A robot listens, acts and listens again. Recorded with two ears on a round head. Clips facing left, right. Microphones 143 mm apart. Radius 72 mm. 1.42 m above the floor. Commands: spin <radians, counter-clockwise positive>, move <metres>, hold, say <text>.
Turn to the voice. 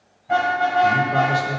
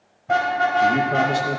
spin -1.05
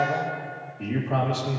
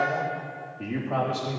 say Found it: a man speaking, straight ahead.